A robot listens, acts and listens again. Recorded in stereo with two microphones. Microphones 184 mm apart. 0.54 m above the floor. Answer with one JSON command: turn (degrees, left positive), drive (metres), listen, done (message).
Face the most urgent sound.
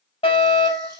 {"turn": 30}
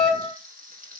{"done": "Facing the fire alarm."}